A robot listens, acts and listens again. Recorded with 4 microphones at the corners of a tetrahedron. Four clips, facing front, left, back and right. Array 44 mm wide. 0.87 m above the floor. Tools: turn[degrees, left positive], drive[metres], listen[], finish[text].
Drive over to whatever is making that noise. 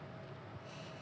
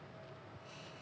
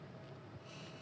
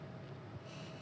Action: listen[]
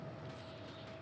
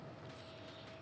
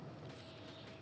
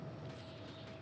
Action: listen[]
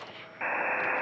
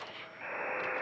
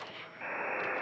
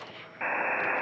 Thought: The buzzer: 50° right.
Action: turn[-50]
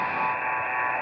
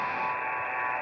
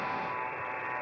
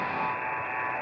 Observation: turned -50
Action: drive[1.0]
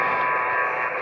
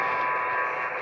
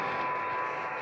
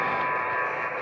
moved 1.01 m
Action: drive[1.0]
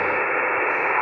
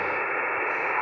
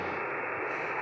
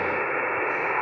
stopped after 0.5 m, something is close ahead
Action: finish[I am next to the buzzer.]